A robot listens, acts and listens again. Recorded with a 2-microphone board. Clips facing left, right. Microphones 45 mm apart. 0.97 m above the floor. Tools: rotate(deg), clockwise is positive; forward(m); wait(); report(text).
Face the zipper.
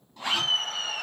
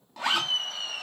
rotate(90)
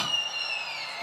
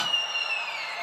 wait()
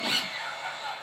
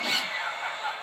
rotate(-10)
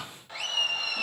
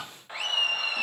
wait()
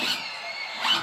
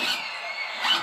report("Facing the zipper, under 1 m away.")